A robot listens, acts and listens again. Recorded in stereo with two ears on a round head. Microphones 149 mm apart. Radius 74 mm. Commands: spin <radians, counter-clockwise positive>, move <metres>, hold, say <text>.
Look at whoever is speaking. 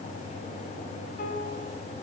hold
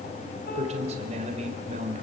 spin -0.70
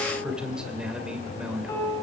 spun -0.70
say Found it: a man speaking, straight ahead, 2 to 4 m away.